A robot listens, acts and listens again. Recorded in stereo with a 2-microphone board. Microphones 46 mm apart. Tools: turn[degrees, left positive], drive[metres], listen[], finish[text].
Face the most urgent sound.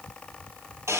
Action: listen[]
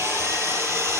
Action: listen[]
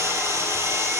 Action: finish[I can't make out anything urgent to turn to.]